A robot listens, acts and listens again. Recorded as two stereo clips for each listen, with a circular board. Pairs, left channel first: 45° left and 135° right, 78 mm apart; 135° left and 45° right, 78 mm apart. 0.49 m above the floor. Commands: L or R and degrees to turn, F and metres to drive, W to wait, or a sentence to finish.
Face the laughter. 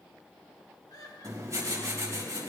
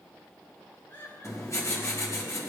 L80
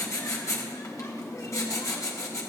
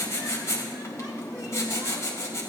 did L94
R15
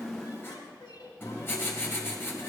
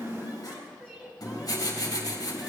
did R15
L30
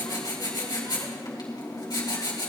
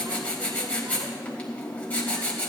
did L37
R10
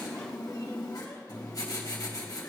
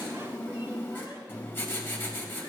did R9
W
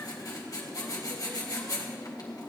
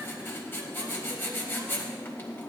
Facing where the laughter came from. I can't hear it now.